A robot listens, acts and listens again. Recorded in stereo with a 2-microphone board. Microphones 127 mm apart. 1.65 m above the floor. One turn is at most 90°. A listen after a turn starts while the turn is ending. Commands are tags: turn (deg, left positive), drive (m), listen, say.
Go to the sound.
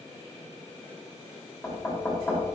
<turn deg="30"/>
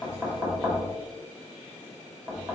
<turn deg="-30"/>
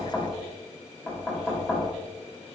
<turn deg="-10"/>
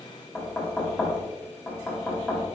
<drive m="1.0"/>
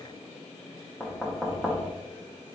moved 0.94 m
<drive m="1.0"/>
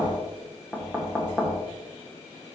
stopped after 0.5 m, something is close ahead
<turn deg="-10"/>
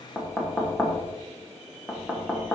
<say>I am next to the knocking.</say>